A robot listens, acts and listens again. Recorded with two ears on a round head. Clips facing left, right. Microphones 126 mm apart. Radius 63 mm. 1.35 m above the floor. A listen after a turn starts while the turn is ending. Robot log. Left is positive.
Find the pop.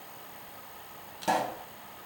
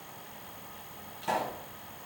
note: The pop: about 45° left or 135° left.
cmd yaw +45
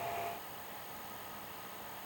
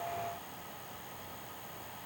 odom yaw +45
cmd idle
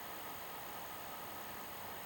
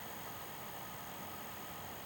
end: I heard a pop, but can't make it out now. It was about straight ahead or 90° left.